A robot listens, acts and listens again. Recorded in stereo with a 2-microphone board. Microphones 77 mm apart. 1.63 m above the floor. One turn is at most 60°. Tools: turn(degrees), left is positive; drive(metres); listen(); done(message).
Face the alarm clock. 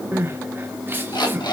turn(degrees=60)
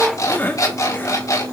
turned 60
turn(degrees=45)
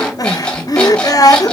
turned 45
turn(degrees=15)
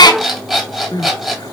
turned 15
done("Found it: an alarm clock, straight ahead, 2 to 4 m away.")